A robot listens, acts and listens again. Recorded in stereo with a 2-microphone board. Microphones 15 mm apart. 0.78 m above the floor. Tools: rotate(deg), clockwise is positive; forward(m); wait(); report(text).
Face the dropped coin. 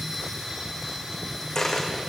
rotate(-30)
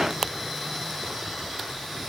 wait()
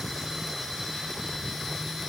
report("I heard a dropped coin, but can't make it out now. It was about straight ahead or 120° left.")